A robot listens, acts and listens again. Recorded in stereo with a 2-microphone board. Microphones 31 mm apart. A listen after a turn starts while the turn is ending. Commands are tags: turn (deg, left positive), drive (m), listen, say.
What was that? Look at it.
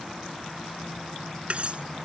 <turn deg="-45"/>
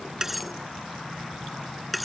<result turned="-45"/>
<say>Facing the cutlery clinking.</say>